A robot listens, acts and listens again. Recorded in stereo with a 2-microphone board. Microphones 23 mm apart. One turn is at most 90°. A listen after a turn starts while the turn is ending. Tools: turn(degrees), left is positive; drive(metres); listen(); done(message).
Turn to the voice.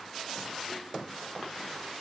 listen()
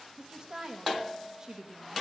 turn(degrees=-20)
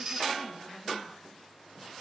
listen()
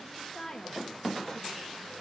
turn(degrees=25)
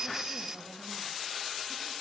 listen()
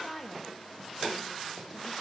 done("Found it: a woman speaking, straight ahead, 2 to 4 m away.")